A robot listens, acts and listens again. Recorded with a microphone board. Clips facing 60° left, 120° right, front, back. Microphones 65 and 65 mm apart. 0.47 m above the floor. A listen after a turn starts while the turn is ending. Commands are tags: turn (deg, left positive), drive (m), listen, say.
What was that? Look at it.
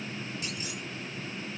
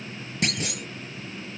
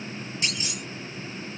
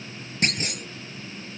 <turn deg="-135"/>
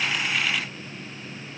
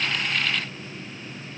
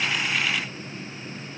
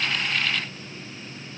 <say>Facing where the clunk came from. I can't hear it now.</say>